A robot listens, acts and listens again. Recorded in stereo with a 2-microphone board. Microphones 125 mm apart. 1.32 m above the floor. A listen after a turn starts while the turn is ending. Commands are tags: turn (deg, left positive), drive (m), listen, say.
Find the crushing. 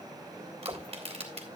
<turn deg="-55"/>
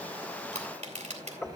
<turn deg="-70"/>
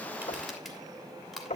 <say>Found it: crushing, straight ahead, 2 to 4 m away.</say>